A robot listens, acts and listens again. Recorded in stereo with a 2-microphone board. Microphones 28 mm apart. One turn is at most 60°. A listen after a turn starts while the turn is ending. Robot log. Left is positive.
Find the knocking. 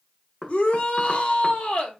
cmd yaw +30
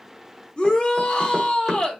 cmd idle
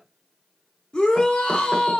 cmd idle
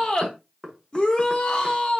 note: So it is at 15° right.
cmd yaw -15
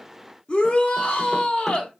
cmd idle
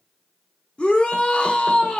cmd idle
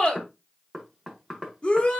end: Facing the knocking.